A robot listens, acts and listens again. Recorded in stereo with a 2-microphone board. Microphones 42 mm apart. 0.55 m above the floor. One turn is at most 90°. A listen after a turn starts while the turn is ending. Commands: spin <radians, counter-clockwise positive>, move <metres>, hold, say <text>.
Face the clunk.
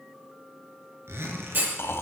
spin -0.87
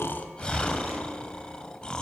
hold
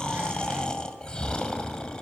say I heard a clunk, but can't make it out now. It was about straight ahead or 80° right.